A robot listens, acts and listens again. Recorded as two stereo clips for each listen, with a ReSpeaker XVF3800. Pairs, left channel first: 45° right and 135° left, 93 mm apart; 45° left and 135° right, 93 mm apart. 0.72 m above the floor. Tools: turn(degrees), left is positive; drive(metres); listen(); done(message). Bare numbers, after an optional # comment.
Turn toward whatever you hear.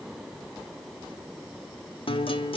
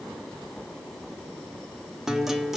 # The guitar: 50° right.
turn(-50)
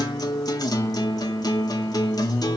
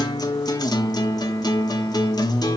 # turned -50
done("Found it: a guitar, straight ahead, under 1 m away.")